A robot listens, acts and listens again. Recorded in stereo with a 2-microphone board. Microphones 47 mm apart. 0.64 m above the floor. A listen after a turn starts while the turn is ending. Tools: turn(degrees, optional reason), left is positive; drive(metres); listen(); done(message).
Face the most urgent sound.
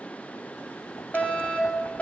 turn(degrees=30, reason="The fire alarm: about 30° left or 150° left.")
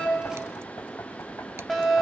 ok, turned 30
done("Found it: a fire alarm, straight ahead.")